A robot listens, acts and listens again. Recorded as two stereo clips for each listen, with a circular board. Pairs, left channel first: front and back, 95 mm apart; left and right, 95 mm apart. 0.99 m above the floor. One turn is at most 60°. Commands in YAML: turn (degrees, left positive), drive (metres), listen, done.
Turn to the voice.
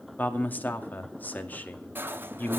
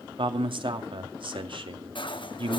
turn: -60
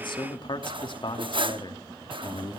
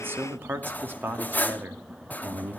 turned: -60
turn: -25
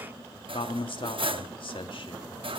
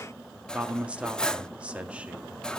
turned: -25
turn: -15
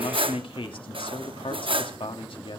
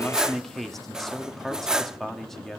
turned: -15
done: "Found it: a man speaking, straight ahead."